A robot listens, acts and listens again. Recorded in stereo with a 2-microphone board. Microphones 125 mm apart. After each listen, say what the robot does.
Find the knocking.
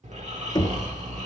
Turn 35° left.
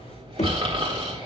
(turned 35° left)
Turn 110° left.
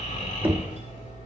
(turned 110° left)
Turn 15° right.
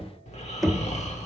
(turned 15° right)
Facing the knocking, 1 to 2 m away.